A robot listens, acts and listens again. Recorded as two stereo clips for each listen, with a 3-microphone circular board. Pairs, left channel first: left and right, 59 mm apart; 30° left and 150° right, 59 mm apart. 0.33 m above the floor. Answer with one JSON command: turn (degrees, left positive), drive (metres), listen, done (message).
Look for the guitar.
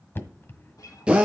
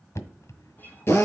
{"turn": 85}
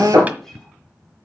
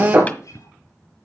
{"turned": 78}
{"turn": 10}
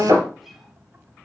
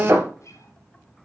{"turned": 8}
{"done": "Facing the guitar, 2 to 4 m away."}